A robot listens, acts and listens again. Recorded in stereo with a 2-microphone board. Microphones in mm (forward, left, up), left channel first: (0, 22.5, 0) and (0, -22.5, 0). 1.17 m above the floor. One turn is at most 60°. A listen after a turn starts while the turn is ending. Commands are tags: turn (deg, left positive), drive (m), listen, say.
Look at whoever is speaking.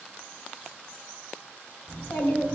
<turn deg="60"/>
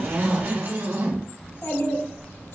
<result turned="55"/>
<turn deg="60"/>
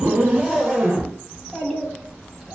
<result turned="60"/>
<say>Facing the child speaking, 1 to 2 m away.</say>